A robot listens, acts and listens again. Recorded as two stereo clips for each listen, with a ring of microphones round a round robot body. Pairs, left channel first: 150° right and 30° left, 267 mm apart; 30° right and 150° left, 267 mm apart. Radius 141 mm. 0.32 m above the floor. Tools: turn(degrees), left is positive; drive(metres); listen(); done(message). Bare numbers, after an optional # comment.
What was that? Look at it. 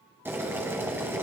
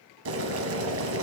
# The boiling: 110° left.
turn(110)
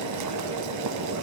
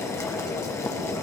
# The boiling is now 50° left.
turn(50)
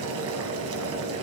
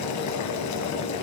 # The boiling is now 10° right.
turn(-10)
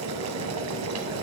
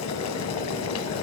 done("Found it: boiling, straight ahead.")